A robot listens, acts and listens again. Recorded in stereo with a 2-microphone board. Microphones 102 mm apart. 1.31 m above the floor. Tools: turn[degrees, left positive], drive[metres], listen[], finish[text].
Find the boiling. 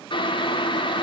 Thought: The boiling: about 50° left or 130° left.
Action: turn[50]
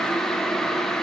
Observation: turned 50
Action: finish[Found it: boiling, straight ahead, under 1 m away.]